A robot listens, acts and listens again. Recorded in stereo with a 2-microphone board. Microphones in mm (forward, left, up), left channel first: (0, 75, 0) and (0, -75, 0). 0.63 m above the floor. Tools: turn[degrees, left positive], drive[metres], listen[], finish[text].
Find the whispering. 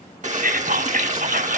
Action: turn[-90]
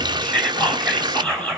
Action: finish[Found it: whispering, straight ahead.]